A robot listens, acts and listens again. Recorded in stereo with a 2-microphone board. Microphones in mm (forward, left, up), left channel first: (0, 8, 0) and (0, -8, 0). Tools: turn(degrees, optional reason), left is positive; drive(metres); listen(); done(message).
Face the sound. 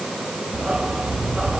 turn(degrees=-90)
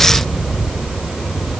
turn(degrees=10, reason="So it is at 10° left.")
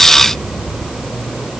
turn(degrees=10, reason="The dog barking is now 10° left.")
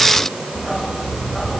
done("Found it: a dog barking, straight ahead.")